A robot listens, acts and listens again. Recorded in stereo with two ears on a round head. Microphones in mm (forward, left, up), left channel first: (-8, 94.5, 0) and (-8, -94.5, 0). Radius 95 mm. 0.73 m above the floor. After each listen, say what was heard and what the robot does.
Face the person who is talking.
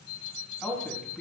Turn 30° left.
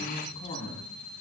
So it is at 150° left. Turn 150° left.
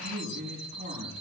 The man speaking is now 45° right. Turn 45° right.
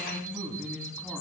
Facing the man speaking.